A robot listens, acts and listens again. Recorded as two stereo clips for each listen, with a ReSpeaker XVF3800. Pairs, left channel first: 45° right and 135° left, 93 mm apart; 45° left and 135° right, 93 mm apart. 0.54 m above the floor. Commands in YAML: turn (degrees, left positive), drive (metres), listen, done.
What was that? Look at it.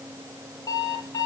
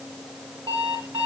turn: -100
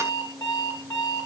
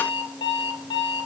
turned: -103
done: "Found it: an alarm clock, straight ahead, over 4 m away."